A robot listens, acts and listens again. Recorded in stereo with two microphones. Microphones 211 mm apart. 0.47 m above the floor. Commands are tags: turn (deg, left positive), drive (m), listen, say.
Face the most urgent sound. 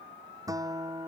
<listen/>
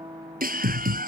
<turn deg="-40"/>
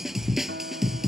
<say>Facing the scream.</say>